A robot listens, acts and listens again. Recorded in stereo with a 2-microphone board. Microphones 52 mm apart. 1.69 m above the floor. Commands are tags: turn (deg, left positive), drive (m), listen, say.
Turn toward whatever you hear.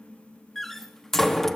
<turn deg="30"/>
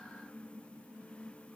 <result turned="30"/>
<listen/>
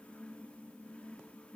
<say>I heard a door slam, but can't make it out now. It was about 25° right or 145° left.</say>